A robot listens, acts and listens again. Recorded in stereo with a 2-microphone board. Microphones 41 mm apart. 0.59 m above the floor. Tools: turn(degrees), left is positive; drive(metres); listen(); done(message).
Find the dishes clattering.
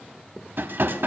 turn(degrees=-55)
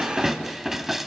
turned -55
done("Found it: dishes clattering, straight ahead.")